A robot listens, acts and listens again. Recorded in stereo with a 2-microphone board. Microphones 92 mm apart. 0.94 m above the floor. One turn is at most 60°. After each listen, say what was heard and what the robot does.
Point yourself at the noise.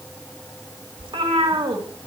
The cat meowing: about 75° right or 105° right. Turn 60° right.
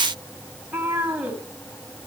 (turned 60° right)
So it is at 15° right. Turn 15° right.
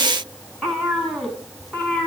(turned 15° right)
Facing the cat meowing, over 4 m away.